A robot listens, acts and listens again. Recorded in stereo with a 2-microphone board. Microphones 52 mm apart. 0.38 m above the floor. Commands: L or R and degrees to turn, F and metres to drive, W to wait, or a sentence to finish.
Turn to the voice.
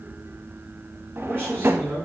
R40
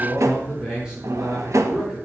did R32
R10
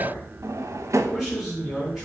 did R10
Found it: a man speaking, straight ahead, over 4 m away.